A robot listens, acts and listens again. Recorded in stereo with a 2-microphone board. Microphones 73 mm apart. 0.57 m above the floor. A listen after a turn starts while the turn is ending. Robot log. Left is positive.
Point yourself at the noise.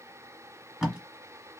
cmd yaw -30
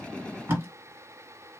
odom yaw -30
note: So it is at 145° right.
cmd yaw -145
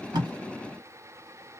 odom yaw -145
cmd idle
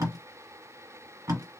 note: The tape being pulled is now 50° right.
cmd yaw -50
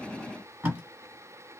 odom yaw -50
note: The tape being pulled is now 20° right.
cmd yaw -20
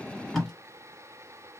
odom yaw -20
end: Found it: tape being pulled, straight ahead, 1 to 2 m away.